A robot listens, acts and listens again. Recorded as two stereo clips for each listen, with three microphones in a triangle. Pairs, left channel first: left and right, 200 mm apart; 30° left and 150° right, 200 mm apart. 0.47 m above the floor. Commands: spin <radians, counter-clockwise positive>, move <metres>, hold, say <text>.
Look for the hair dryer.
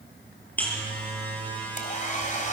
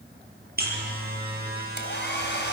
spin 0.79
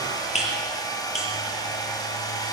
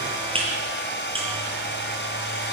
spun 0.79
spin 0.35
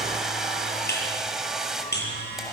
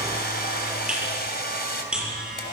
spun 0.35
say Found it: a hair dryer, straight ahead, 2 to 4 m away.